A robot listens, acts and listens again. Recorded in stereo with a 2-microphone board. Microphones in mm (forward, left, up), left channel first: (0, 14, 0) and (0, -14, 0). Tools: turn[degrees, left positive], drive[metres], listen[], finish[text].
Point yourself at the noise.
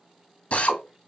Thought: The drill: about 55° left or 125° left.
Action: turn[55]
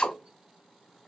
Thought: So it is at 50° left.
Action: turn[50]
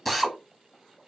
Action: finish[Facing the drill, under 1 m away.]